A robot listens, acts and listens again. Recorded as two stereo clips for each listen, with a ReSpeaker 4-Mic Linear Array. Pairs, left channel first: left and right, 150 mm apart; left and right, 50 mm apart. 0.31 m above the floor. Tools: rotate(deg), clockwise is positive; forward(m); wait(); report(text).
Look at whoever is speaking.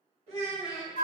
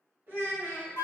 rotate(45)
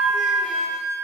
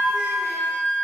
wait()
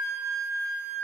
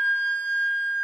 wait()
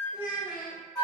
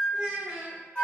rotate(10)
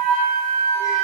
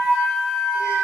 wait()
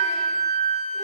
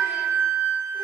wait()
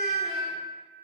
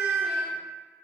report("Facing where the child speaking came from. I can't hear it now.")